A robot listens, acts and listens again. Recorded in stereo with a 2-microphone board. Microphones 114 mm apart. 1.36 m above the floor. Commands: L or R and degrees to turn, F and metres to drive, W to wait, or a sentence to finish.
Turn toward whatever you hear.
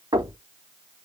R45
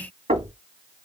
R95
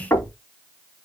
L20
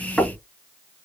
Found it: knocking, straight ahead.